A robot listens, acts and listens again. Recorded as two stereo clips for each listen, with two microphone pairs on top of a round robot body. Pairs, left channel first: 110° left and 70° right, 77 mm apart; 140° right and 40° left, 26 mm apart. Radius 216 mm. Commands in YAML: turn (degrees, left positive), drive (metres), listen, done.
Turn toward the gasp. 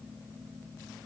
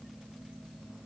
listen: true
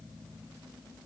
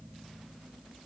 listen: true
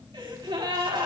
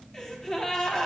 turn: -70
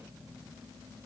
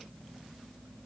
done: "Facing where the gasp came from. I can't hear it now."